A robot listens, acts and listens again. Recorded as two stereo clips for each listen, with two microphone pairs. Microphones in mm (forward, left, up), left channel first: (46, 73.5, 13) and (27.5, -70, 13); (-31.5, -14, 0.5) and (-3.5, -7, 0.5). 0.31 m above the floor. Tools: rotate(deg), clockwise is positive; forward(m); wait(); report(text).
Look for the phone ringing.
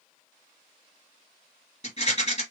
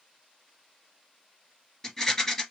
wait()
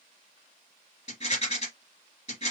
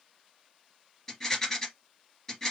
wait()
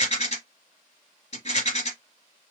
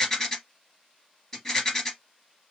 report("I can't make out a phone ringing to turn to.")